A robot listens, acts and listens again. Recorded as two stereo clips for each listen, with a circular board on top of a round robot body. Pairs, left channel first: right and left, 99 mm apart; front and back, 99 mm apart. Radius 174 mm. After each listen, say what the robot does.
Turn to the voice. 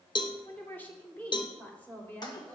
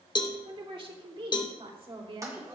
Turn 165° right.
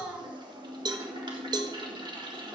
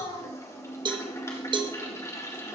Turn 20° left.
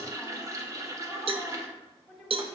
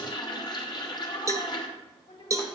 Found it: a woman speaking, straight ahead.